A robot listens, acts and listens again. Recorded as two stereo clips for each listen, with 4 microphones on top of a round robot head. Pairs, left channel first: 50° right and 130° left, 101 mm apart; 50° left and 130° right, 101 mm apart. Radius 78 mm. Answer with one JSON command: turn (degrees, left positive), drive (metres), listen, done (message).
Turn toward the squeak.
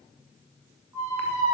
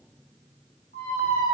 {"turn": 70}
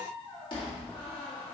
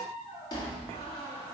{"done": "Facing the squeak."}